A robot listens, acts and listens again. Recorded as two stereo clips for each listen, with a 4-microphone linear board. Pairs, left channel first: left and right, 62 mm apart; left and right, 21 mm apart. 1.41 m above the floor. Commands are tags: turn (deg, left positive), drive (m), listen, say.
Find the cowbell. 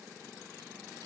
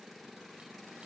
<listen/>
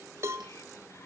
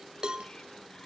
<turn deg="-40"/>
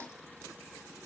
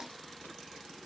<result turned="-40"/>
<listen/>
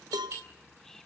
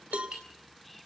<turn deg="-100"/>
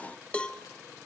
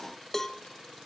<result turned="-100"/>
<turn deg="15"/>
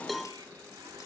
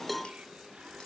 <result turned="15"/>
<say>Facing the cowbell.</say>